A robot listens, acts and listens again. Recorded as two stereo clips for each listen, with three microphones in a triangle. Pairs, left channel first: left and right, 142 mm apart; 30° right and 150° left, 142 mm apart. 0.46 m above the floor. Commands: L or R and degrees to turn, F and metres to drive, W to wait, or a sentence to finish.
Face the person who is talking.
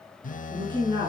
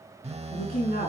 R35
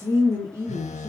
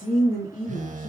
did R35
R20
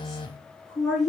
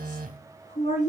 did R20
Found it: a woman speaking, straight ahead.